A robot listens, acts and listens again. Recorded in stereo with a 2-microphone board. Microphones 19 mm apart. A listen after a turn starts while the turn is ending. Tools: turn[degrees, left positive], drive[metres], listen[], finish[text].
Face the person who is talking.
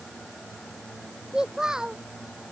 Thought: The child speaking: about 35° right or 145° right.
Action: turn[-35]
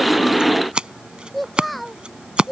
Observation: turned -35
Action: finish[Facing the child speaking.]